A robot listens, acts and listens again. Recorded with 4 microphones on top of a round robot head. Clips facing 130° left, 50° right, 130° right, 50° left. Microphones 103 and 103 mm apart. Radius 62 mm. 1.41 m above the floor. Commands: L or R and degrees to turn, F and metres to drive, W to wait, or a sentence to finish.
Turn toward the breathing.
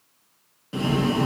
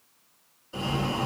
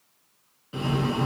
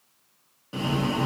L105
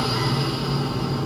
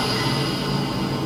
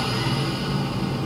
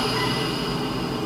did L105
Facing the breathing.